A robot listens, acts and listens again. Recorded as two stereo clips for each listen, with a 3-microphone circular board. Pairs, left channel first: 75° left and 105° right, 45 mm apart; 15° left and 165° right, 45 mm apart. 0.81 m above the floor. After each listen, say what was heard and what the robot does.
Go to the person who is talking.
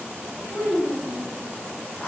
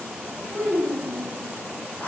The child speaking: 55° left. Turn 55° left.
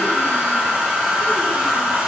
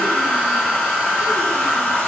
Keep listening.
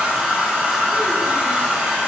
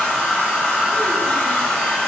Keep listening.
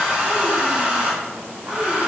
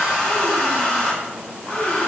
I heard a child speaking from this way, but can't make it out now. I did not reach it.